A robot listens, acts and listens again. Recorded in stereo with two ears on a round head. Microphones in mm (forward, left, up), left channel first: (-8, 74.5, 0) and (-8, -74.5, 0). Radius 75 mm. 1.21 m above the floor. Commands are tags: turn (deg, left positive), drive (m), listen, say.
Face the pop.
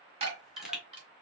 <turn deg="-30"/>
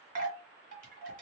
<listen/>
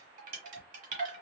<say>I heard a pop, but can't make it out now. It was about 25° left or 145° right.</say>